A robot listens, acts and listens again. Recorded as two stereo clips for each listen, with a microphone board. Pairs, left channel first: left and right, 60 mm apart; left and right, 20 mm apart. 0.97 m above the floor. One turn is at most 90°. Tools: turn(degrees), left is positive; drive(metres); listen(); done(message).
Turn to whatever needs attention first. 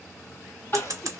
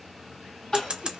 turn(degrees=40)
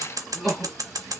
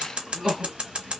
done("Facing the crying, 2 to 4 m away.")